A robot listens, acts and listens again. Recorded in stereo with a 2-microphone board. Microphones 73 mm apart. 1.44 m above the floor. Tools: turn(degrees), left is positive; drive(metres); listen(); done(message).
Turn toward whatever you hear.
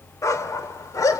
turn(degrees=55)
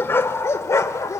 turn(degrees=50)
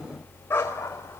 turn(degrees=35)
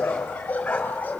turn(degrees=20)
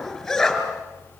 done("Facing the dog barking.")